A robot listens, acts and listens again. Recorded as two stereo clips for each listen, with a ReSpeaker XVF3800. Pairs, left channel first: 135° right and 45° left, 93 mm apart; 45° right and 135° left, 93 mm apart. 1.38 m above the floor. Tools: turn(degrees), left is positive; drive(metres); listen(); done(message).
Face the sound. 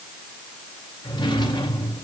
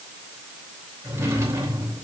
turn(degrees=-165)
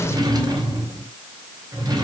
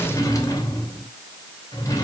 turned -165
done("Facing the drawer, 2 to 4 m away.")